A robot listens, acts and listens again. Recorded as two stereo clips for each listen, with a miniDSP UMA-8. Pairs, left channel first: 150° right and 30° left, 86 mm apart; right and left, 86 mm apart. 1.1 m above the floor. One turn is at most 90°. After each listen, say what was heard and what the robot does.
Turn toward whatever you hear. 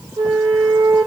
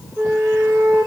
The flute: 40° left. Turn 40° left.
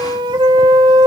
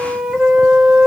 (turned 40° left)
The flute is now 15° left. Turn 15° left.
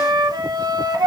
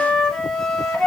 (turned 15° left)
Facing the flute.